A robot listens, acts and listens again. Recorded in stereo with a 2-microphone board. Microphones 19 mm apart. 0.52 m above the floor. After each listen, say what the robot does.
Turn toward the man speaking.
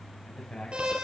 Turn 70° left.
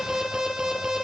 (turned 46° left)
Keep listening.
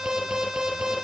Keep listening.
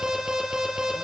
I heard a man speaking, but can't make it out now. It was about 20° left or 65° left.